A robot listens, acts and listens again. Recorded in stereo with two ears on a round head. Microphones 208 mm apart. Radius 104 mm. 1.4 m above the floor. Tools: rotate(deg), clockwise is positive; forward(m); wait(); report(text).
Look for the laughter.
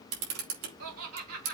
rotate(70)
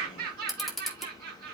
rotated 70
rotate(40)
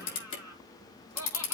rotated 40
rotate(-15)
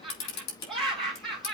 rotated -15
report("Found it: laughter, straight ahead.")